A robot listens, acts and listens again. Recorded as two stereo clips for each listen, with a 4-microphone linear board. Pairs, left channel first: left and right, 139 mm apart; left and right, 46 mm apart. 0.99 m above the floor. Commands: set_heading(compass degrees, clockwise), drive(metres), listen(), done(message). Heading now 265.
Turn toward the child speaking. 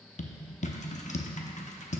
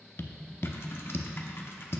listen()
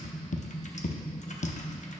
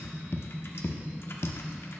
listen()
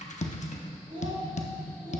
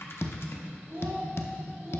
set_heading(340)
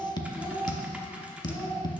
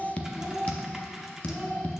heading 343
done("Found it: a child speaking, straight ahead.")